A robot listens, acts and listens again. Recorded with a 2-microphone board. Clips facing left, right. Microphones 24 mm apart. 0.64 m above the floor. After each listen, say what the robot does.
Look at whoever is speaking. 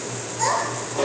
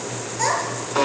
Turn 15° right.
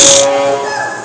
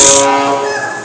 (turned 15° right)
Found it: a child speaking, straight ahead.